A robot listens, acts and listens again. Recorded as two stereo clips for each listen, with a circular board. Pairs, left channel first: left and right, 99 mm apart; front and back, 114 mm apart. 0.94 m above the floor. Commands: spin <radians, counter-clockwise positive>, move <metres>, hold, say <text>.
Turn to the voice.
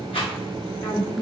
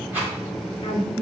hold
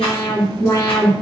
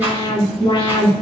hold
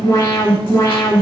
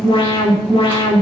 say I can't make out anyone speaking to turn to.